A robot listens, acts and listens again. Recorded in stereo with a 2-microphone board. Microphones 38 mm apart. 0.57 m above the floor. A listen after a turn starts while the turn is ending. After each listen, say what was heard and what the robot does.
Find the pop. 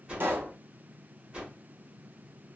The pop: about 70° right or 110° right. Turn 70° right.
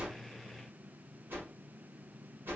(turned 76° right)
Keep listening.
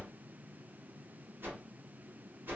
I heard a pop, but can't make it out now. It was about 5° left or 30° right.